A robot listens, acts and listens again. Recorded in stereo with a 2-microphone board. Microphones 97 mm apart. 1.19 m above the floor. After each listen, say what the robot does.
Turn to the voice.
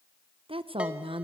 Turn 70° right.
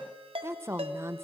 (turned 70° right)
Turn 30° right.
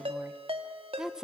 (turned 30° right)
Facing the woman speaking, under 1 m away.